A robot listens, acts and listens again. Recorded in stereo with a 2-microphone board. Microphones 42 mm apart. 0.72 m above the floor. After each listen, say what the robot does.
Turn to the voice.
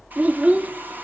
Turn 40° right.
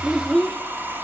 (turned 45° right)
Found it: a child speaking, straight ahead, under 1 m away.